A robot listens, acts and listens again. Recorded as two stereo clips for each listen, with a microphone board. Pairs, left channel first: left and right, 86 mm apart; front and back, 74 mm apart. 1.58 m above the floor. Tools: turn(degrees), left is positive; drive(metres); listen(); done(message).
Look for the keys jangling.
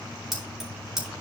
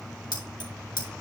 done("Facing the keys jangling.")